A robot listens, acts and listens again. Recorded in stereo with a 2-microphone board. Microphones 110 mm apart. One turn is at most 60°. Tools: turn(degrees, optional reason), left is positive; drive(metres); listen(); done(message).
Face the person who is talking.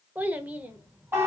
turn(degrees=-15, reason="The child speaking: about 15° right or 165° right.")
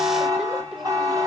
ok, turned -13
listen()
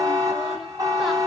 listen()
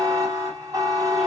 done("I heard a child speaking, but can't make it out now. It was about 5° right or 150° right.")